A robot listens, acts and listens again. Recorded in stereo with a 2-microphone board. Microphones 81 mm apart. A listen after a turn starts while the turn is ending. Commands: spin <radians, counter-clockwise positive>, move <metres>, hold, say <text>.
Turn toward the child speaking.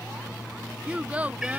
spin -0.35
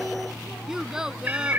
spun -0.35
spin -0.52
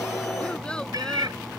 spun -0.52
hold
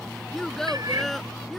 say Found it: a child speaking, straight ahead.